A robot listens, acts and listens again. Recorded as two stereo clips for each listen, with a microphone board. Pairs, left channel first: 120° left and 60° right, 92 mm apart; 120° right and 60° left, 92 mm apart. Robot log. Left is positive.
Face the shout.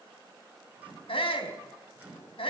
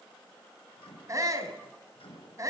note: The shout: 115° left.
cmd yaw +115
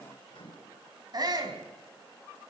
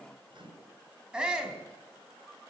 note: The shout is now 20° right.
cmd yaw -20
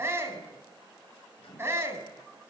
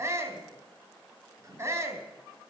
end: Found it: a shout, straight ahead, 2 to 4 m away.